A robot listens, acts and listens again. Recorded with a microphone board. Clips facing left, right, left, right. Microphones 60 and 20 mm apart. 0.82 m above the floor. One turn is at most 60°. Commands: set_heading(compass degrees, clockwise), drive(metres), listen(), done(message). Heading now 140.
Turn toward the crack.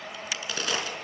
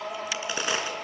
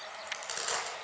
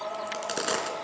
set_heading(165)
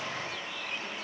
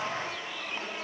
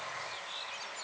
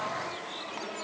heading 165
listen()
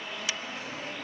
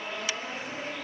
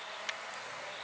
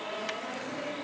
done("I heard a crack, but can't make it out now. It was about straight ahead or 130° right.")